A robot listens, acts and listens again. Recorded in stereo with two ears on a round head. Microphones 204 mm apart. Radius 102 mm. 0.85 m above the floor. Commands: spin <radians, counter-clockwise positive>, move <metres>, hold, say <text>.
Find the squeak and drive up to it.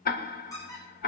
spin 0.26
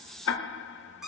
move 1.0
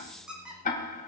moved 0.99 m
move 1.0
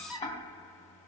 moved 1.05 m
move 1.0
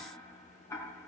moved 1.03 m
hold
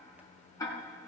hold
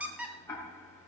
move 1.0
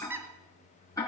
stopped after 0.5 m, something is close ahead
spin -0.17
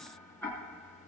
hold
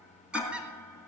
say Arrived at the squeak, straight ahead.